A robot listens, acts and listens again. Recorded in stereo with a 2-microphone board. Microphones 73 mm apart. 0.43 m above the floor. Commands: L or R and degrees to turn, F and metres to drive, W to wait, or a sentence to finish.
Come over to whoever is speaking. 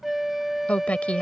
L20
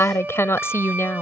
L140
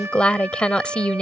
L15
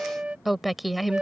F1.0
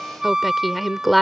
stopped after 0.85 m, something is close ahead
I am next to the woman speaking.